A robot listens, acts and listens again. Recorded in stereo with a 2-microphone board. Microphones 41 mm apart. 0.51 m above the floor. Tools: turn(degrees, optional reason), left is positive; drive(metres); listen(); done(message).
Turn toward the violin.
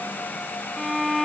turn(degrees=30)
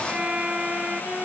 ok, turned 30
turn(degrees=-30, reason="So it is at 30° right.")
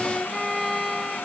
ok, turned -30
done("Facing the violin.")